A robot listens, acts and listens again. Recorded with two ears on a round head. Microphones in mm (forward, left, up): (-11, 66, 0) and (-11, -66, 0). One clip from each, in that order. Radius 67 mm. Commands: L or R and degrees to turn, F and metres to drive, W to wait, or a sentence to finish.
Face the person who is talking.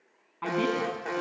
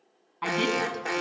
R90
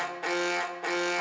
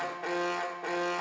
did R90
W
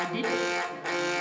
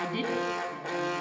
Facing the woman speaking.